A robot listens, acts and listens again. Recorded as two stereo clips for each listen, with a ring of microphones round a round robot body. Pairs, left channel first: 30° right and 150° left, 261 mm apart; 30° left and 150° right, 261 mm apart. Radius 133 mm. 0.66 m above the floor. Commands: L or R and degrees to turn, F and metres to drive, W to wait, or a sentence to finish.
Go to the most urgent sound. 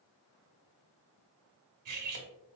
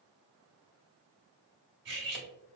W
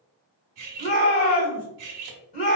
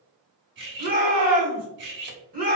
R90
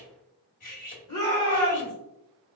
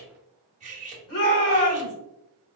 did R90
L15
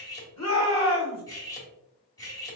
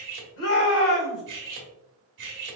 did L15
F1.0
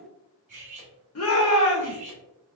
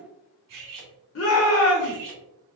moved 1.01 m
F1.0
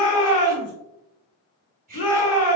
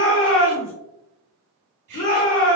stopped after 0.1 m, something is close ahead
Arrived at the shout, straight ahead.